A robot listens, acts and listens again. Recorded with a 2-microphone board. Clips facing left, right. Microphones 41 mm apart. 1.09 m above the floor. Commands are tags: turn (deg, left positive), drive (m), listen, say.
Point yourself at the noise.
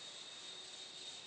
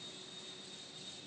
<listen/>
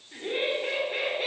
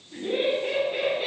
<turn deg="60"/>
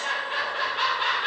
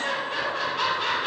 <turn deg="30"/>
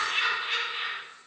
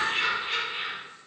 <say>Facing the laughter, 1 to 2 m away.</say>